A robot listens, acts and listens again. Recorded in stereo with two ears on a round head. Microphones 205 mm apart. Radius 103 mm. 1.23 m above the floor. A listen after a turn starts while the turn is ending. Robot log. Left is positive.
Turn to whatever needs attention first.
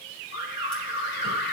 note: The alarm: about 45° left or 135° left.
cmd yaw +45
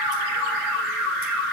end: Found it: an alarm, straight ahead.